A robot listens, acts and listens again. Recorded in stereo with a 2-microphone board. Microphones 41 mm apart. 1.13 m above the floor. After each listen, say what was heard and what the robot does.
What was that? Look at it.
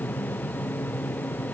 Keep listening.
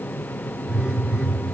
The phone buzzing: about 25° right or 155° right. Turn 25° right.
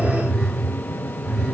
Facing the phone buzzing, 1 to 2 m away.